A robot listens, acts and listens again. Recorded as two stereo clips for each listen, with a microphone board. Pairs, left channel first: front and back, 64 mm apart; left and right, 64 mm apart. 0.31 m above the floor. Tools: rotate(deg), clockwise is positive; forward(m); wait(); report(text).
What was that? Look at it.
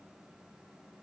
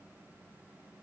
wait()
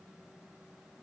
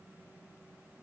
wait()
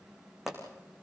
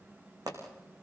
rotate(95)
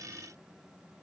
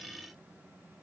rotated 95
report("I heard a pop from this way, but can't make it out now.")